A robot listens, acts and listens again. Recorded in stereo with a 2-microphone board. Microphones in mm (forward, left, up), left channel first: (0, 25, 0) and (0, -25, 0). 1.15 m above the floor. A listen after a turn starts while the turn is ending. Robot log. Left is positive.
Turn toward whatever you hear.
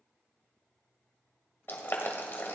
note: The boiling: about 45° left or 135° left.
cmd yaw +45
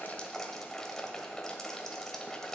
note: So it is at 10° left.
cmd yaw +10
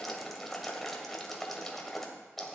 end: Facing the boiling, 1 to 2 m away.